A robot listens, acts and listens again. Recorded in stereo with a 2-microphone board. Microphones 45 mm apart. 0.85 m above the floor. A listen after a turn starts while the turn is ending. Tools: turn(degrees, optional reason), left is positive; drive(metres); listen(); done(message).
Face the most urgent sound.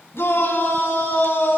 turn(degrees=65, reason="The shout: about 65° left or 115° left.")
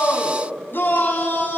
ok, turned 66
turn(degrees=50, reason="So it is at 50° left.")
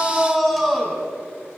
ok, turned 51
done("Found it: a shout, straight ahead, over 4 m away.")